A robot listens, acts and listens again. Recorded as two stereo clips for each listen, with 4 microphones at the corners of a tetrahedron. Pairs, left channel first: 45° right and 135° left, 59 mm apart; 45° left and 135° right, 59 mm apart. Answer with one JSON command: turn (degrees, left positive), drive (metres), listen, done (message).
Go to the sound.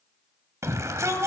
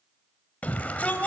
{"turn": 110}
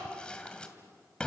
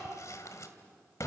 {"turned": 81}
{"turn": 25}
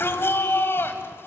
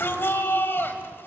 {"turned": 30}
{"drive": 1.0}
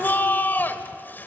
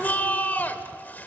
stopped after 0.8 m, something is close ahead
{"done": "I am next to the shout."}